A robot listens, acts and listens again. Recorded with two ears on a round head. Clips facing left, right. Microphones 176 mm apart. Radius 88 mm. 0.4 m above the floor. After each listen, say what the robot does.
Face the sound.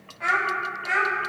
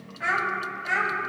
Turn 30° left.
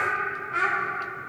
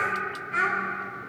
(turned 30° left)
Turn 25° right.
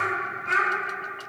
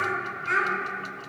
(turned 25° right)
Turn 20° right.
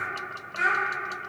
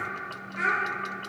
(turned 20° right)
Facing the child speaking, 2 to 4 m away.